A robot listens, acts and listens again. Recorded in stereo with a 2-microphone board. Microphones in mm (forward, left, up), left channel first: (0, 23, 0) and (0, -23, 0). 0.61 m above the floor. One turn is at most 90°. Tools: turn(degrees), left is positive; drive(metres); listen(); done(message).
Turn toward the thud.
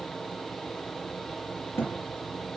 turn(degrees=70)
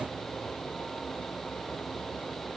listen()
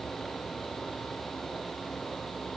done("I heard a thud, but can't make it out now. It was about straight ahead or 40° left.")